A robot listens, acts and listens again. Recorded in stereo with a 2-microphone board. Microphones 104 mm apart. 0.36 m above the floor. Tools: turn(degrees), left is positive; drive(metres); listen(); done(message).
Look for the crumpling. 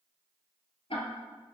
listen()
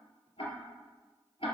listen()
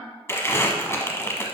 turn(degrees=25)
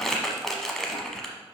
done("Facing the crumpling.")